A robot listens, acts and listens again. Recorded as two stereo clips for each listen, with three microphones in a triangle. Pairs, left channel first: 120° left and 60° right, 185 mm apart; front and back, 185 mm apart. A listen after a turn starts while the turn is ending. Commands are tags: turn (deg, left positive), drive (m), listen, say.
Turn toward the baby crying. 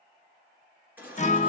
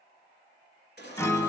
<turn deg="20"/>
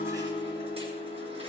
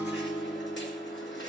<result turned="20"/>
<listen/>
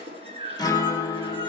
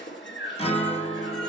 <say>Found it: a baby crying, straight ahead.</say>